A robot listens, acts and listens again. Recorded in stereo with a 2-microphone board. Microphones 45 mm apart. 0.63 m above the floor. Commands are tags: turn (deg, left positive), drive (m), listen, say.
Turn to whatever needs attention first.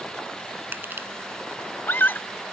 <turn deg="45"/>
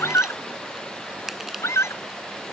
<turn deg="90"/>
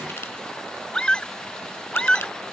<turn deg="15"/>
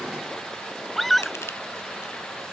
<say>Facing the scream.</say>